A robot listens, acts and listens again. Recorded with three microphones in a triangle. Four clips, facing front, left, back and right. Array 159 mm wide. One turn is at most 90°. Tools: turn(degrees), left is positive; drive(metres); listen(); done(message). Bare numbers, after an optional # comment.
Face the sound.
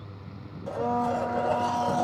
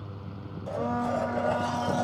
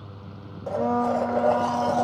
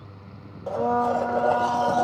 # The blender: 130° right.
turn(-90)
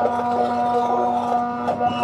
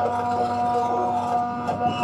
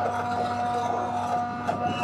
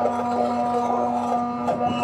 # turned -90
# The blender is now 25° right.
turn(-25)
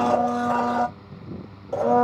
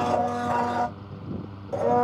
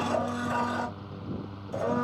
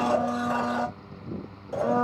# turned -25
# The blender is now 10° left.
turn(10)
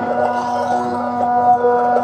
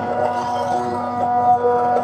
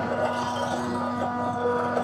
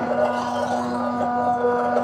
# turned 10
done("Found it: a blender, straight ahead, under 1 m away.")